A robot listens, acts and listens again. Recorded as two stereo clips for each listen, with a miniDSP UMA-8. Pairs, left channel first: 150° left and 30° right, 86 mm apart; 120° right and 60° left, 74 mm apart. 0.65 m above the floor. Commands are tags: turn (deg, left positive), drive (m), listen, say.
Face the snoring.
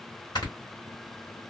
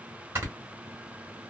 <turn deg="115"/>
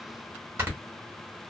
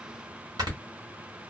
<turn deg="35"/>
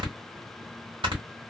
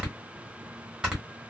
<turn deg="-20"/>
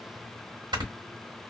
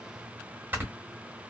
<say>Facing the snoring, 1 to 2 m away.</say>